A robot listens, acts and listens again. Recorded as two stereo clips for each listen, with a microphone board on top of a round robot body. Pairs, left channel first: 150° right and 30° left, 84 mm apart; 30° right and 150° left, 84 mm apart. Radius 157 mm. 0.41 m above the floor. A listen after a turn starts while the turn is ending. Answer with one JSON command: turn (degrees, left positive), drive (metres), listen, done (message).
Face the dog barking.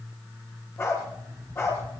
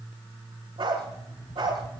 {"turn": 150}
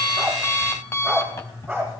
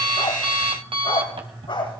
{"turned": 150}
{"turn": -35}
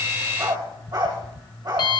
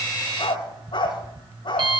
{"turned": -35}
{"done": "Facing the dog barking, over 4 m away."}